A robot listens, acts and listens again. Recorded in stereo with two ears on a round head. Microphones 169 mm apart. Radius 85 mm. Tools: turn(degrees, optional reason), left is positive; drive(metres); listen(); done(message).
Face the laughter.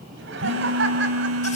turn(degrees=-70, reason="The laughter: about 70° right or 110° right.")
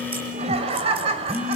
turn(degrees=-35, reason="So it is at 35° right.")
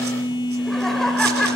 done("Found it: laughter, straight ahead.")